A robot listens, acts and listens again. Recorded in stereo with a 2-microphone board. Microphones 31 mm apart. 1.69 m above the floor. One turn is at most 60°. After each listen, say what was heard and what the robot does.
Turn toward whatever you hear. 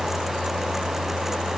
Keep listening.
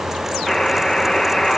The buzzer: about 15° left or 165° left. Turn 15° left.
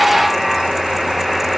Found it: a buzzer, straight ahead.